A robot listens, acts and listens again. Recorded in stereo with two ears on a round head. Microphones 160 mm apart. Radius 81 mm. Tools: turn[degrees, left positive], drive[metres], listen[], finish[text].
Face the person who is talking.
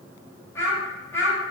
Action: turn[30]
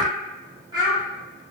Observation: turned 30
Thought: So it is at 25° right.
Action: turn[-25]
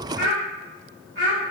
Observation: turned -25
Thought: The child speaking is now 20° right.
Action: turn[-20]
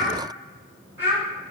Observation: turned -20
Thought: The child speaking is now 10° right.
Action: turn[-10]
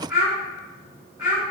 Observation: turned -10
Action: finish[Found it: a child speaking, straight ahead.]